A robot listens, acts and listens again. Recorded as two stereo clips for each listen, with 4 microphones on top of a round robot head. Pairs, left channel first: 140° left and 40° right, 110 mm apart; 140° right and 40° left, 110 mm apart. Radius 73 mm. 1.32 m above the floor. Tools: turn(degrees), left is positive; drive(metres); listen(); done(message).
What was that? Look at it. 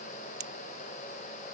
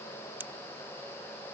turn(degrees=-30)
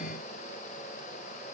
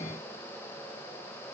done("Facing where the pop came from. I can't hear it now.")